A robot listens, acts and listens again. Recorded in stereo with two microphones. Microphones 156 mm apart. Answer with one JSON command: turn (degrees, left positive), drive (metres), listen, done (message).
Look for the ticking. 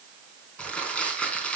{"listen": true}
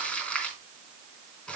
{"listen": true}
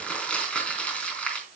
{"done": "I can't make out ticking, only crumpling."}